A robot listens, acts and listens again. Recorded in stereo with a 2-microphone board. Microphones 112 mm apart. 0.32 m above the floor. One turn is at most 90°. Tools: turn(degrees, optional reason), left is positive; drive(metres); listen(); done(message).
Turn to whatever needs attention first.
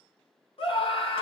turn(degrees=60, reason="The scream: about 60° left or 120° left.")
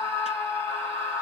turn(degrees=30, reason="So it is at 30° left.")
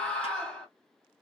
turn(degrees=10, reason="The scream is now 10° left.")
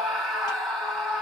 done("Found it: a scream, straight ahead.")